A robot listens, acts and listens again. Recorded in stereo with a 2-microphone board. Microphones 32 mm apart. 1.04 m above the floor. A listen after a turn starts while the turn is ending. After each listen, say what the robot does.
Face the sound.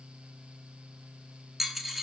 Turn 30° right.
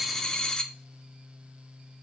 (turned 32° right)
Turn 25° left.
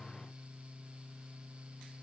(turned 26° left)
I heard a dropped coin from this way, but can't make it out now.